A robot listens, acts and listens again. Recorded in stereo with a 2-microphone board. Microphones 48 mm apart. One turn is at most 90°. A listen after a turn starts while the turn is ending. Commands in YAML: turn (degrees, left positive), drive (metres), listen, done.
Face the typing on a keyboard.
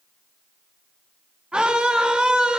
listen: true
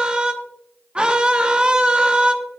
listen: true
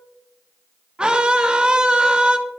done: "I can't make out typing on a keyboard, only a scream."